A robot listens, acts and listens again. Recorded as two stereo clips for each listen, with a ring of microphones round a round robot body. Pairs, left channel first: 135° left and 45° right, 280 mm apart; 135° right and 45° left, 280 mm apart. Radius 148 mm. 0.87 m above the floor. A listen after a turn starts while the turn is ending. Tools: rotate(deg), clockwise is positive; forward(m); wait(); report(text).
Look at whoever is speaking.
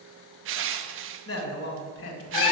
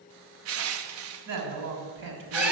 rotate(-85)
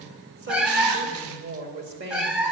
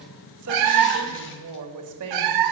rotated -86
rotate(-10)
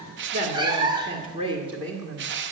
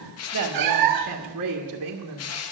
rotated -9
rotate(-30)
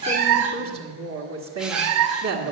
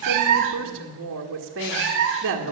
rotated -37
report("Facing the woman speaking.")